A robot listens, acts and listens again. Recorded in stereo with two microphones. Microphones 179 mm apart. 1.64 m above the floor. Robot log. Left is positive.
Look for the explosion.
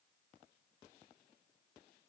cmd idle
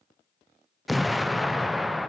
cmd yaw +30
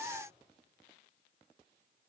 cmd idle
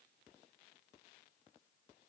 end: I heard an explosion, but can't make it out now. It was about 30° right or 150° left.